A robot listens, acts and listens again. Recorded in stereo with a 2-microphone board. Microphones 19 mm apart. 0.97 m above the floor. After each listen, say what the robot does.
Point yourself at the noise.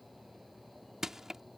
Turn 20° right.
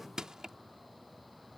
Turn 140° right.
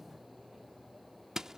Turn 40° right.
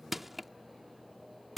Turn 15° right.
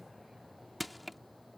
Facing the crushing.